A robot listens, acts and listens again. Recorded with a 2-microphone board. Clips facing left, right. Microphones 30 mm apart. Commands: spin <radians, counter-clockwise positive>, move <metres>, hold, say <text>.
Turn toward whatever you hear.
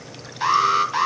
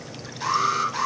spin 0.70
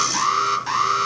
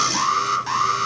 say Facing the alarm.